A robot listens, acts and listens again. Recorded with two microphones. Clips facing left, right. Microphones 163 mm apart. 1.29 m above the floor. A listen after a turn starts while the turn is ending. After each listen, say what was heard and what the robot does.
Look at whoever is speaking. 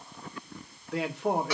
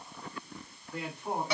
The man speaking: about 70° left or 110° left. Turn 70° left.
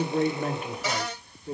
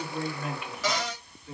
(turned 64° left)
So it is at 35° left. Turn 35° left.
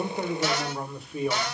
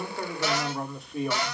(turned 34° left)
Facing the man speaking, under 1 m away.